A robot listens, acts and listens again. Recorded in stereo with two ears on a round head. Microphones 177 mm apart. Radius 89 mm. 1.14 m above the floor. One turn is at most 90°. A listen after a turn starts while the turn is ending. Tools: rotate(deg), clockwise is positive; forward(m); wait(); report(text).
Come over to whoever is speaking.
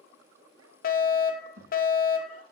rotate(75)
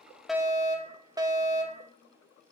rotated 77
wait()
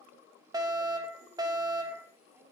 wait()
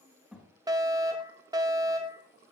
forward(1.0)
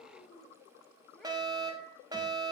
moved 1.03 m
wait()
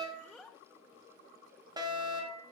rotate(-10)
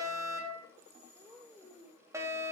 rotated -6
forward(1.0)
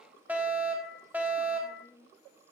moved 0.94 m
forward(1.0)
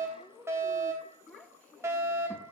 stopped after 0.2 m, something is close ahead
report("Arrived at the child speaking, straight ahead.")